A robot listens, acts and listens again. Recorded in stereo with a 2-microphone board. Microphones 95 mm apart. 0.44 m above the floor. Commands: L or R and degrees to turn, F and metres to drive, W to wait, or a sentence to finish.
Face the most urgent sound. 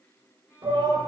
R45
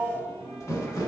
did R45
R15
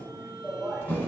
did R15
Found it: a shout, straight ahead, 1 to 2 m away.